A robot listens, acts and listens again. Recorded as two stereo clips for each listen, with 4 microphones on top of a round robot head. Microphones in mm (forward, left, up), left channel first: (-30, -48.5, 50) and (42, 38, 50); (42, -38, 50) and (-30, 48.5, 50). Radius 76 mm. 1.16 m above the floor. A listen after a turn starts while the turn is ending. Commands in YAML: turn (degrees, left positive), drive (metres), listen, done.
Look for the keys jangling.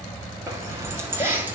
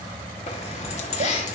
turn: -25
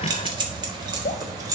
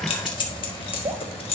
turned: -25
turn: -10
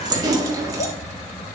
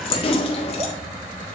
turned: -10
turn: -10
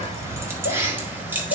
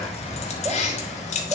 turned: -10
turn: -25
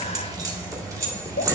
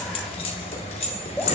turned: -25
turn: -15
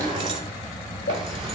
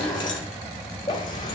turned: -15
done: "Found it: keys jangling, straight ahead."